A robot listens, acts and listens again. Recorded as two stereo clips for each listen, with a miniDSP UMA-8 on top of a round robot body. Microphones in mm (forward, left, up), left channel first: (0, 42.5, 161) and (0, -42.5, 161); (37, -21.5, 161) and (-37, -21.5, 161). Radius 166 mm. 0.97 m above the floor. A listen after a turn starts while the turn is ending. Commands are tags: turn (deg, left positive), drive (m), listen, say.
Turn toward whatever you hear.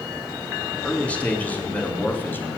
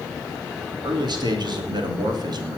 <turn deg="155"/>
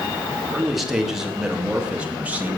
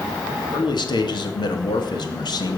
<turn deg="-20"/>
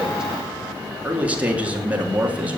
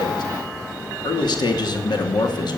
<turn deg="-15"/>
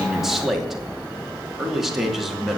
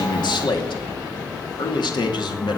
<say>Found it: a man speaking, straight ahead, 2 to 4 m away.</say>